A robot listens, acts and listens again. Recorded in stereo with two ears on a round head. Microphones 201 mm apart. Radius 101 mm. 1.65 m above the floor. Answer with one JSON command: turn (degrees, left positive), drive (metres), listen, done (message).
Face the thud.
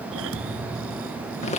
{"turn": -70}
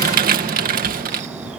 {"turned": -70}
{"listen": true}
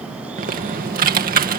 {"done": "I heard a thud, but can't make it out now. It was about straight ahead or 40° right."}